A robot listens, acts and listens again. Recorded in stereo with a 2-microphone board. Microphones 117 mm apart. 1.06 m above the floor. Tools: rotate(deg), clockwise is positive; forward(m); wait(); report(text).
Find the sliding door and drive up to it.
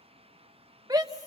wait()
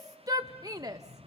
rotate(90)
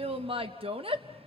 wait()
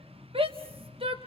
rotate(10)
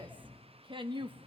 forward(1.0)
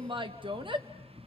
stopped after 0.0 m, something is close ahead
report("Blocked. The sliding door is further on, straight ahead.")